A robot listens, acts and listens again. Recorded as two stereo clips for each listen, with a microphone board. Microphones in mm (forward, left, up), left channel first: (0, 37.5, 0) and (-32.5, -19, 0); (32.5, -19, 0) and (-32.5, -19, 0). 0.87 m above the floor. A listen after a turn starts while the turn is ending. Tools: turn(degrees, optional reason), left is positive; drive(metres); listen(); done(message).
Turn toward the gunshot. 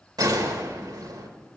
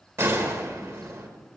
turn(degrees=-130, reason="The gunshot: 130° right.")
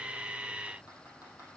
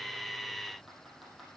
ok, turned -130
done("I heard a gunshot from this way, but can't make it out now.")